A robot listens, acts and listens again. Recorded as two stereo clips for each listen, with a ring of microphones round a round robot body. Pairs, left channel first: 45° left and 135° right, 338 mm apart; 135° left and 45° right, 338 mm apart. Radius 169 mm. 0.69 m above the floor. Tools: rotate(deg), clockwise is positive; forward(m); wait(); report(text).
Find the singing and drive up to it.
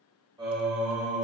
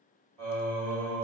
rotate(60)
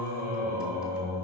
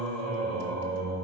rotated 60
forward(1.0)
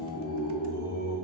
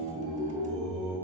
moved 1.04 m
forward(1.0)
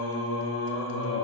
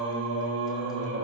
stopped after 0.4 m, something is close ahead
report("Arrived at the singing, straight ahead.")